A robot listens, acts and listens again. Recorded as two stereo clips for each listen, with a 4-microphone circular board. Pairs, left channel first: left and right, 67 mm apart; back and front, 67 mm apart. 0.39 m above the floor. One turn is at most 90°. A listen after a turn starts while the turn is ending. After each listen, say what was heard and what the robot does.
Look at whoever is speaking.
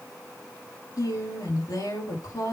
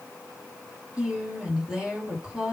The woman speaking: 80° left. Turn 80° left.
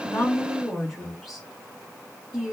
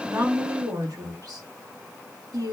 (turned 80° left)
Found it: a woman speaking, straight ahead, over 4 m away.